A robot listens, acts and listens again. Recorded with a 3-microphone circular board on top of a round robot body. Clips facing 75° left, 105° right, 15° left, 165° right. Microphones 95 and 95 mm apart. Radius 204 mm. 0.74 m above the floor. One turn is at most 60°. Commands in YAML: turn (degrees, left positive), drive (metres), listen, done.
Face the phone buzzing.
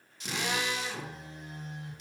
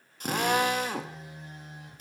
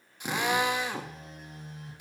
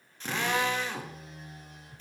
turn: -30
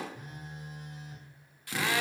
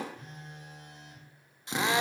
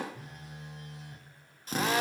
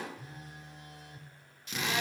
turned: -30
done: "Found it: a phone buzzing, straight ahead, 2 to 4 m away."